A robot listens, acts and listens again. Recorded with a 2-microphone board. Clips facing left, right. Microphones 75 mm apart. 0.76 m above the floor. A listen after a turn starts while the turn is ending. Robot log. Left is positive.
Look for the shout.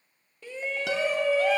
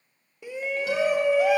cmd yaw -30
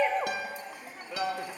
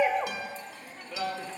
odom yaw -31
note: So it is at 15° left.
cmd yaw +15
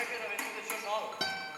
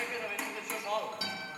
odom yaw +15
end: Facing the shout, under 1 m away.